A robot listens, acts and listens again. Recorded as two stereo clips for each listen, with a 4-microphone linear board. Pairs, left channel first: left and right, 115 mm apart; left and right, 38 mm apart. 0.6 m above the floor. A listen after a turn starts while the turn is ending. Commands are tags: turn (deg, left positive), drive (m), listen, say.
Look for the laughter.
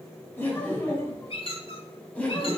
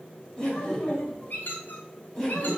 <turn deg="30"/>
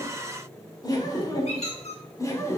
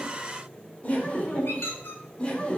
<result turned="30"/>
<turn deg="150"/>
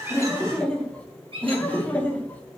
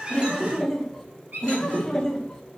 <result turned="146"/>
<turn deg="15"/>
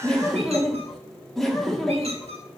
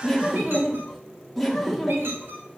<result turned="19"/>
<say>Facing the laughter.</say>